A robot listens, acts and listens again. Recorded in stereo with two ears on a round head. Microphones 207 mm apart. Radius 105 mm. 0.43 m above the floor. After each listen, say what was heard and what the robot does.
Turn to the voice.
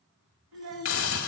The child speaking: about 75° right or 105° right. Turn 75° right.
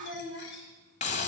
So it is at 25° right. Turn 25° right.
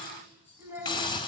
The child speaking is now 10° right. Turn 10° right.
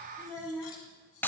Found it: a child speaking, straight ahead, 2 to 4 m away.